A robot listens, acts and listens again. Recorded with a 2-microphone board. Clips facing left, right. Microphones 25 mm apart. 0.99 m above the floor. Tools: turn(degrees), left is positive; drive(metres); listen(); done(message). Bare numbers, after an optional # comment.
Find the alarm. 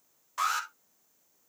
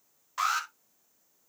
turn(-30)
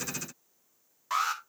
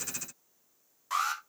# So it is at 20° left.
turn(20)
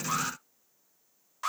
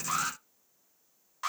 done("Facing the alarm, 2 to 4 m away.")